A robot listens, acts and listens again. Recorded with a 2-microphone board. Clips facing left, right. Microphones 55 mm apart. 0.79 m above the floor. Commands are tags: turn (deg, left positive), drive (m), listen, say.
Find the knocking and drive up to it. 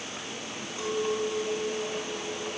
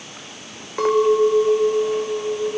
<listen/>
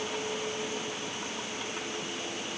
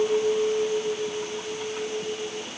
<listen/>
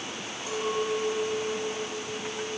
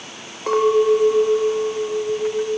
<say>I can't make out knocking to turn to.</say>